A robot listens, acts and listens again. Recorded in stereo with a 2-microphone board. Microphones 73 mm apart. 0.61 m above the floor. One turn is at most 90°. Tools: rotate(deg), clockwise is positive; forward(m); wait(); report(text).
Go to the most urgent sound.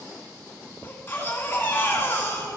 rotate(-30)
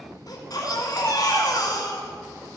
rotate(-90)
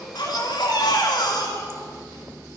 rotate(-80)
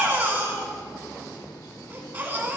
rotate(25)
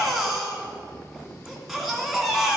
forward(1.0)
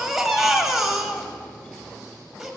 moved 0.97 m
forward(1.0)
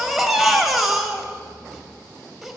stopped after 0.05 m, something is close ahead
report("Arrived at the baby crying, straight ahead.")